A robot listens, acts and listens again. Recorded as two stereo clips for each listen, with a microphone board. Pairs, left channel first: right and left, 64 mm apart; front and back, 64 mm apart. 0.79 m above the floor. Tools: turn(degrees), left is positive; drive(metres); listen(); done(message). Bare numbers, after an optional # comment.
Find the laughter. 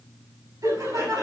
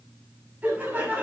# The laughter: 115° left.
turn(115)
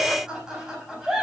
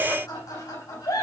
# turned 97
# The laughter is now 10° left.
turn(10)
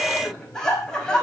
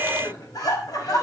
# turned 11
# The laughter is now 10° right.
turn(-10)
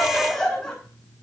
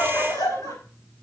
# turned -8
done("Facing the laughter, over 4 m away.")